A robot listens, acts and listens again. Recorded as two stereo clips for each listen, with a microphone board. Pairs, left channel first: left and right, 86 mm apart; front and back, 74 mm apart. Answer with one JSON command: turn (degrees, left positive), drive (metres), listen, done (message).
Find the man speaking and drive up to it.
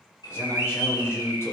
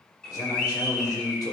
{"turn": 35}
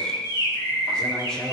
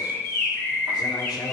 {"drive": 1.0}
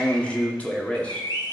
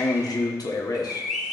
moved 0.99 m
{"turn": 20}
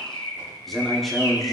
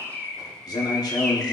{"drive": 1.0}
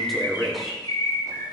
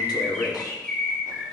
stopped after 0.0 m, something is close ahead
{"done": "I am next to the man speaking."}